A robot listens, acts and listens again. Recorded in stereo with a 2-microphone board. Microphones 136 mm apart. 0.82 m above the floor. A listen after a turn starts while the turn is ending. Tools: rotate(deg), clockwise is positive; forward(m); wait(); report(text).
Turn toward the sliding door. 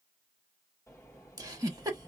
rotate(-25)
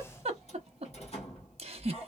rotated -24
rotate(-135)
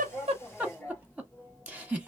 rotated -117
rotate(-15)
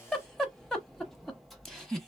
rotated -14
report("Facing the sliding door, 1 to 2 m away.")